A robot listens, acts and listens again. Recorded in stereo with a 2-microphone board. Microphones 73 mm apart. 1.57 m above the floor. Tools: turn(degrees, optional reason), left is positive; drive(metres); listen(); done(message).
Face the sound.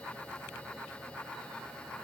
listen()
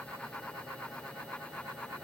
listen()
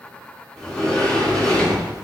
turn(degrees=30)
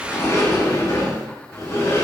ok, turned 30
turn(degrees=145, reason="So it is at 145° left.")
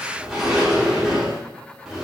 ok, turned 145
done("Found it: a sliding door, straight ahead, under 1 m away.")